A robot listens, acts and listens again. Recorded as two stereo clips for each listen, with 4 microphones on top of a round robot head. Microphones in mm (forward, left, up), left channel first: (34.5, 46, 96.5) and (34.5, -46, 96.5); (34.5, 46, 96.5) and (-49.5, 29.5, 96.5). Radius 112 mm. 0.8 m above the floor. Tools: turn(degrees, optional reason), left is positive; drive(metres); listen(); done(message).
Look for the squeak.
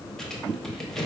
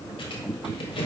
done("Found it: a squeak, straight ahead.")